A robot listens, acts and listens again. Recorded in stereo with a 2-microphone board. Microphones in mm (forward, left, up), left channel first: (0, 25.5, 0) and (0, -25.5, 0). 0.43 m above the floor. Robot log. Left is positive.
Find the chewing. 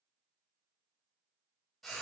cmd idle
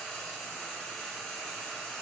cmd idle
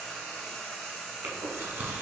note: The chewing: about 50° right or 130° right.
cmd yaw -50
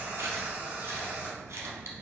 note: So it is at 80° right.
cmd yaw -80
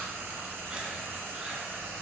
note: The chewing is now 20° right.
cmd yaw -20
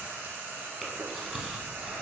end: Found it: chewing, straight ahead.